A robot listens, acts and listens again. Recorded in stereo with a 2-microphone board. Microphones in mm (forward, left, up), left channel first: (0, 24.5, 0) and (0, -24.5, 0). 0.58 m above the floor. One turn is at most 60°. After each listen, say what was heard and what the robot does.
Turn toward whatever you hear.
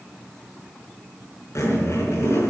Turn 60° left.
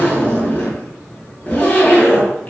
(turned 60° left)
So it is at 35° left. Turn 35° left.
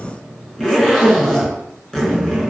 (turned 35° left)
The zipper is now 10° left. Turn 10° left.
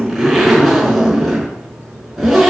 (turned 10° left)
Found it: a zipper, straight ahead, over 4 m away.